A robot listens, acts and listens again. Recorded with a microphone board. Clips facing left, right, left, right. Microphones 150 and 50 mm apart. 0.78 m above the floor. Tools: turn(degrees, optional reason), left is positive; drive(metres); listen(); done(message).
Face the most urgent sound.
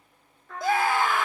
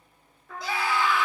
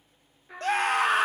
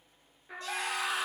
turn(degrees=50, reason="The scream: about 50° left or 130° left.")
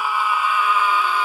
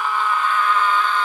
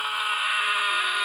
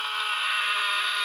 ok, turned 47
turn(degrees=10, reason="So it is at 10° left.")
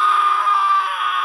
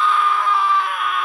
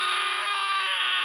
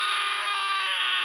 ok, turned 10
done("Found it: a scream, straight ahead, 1 to 2 m away.")